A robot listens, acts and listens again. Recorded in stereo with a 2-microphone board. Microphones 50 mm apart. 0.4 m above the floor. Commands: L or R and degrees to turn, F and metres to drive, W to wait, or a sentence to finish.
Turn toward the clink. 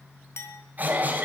L60
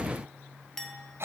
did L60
L10
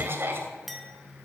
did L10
Facing the clink, 1 to 2 m away.